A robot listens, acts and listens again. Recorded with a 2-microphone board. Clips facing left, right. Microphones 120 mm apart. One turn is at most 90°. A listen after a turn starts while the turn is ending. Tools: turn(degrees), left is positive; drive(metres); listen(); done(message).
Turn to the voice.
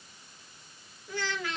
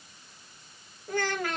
turn(degrees=-50)
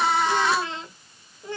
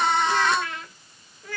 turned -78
turn(degrees=25)
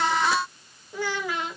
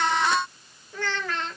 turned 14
turn(degrees=10)
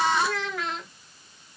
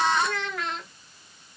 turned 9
done("Facing the child speaking.")